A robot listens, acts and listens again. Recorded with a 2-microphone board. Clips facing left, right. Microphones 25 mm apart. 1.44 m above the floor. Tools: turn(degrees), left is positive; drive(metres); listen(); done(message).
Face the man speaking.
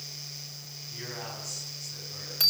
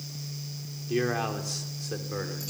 turn(degrees=-60)
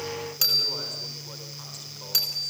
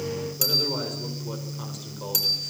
listen()
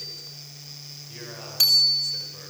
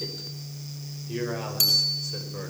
listen()
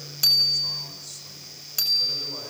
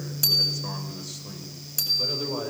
turn(degrees=-15)
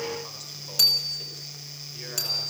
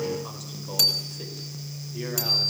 listen()
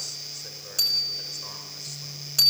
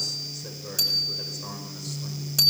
listen()
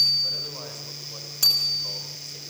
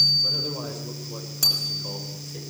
done("Facing where the man speaking came from. I can't hear it now.")